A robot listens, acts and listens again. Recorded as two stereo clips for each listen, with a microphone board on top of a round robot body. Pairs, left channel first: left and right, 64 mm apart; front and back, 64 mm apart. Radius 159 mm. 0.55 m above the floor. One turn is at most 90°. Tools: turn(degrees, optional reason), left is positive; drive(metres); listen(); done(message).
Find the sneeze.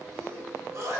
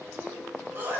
turn(degrees=-90, reason="The sneeze: 125° right.")
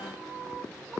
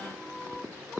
turn(degrees=-35, reason="Nothing new. It was at 35° right.")
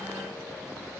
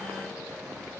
done("I heard a sneeze from this way, but can't make it out now.")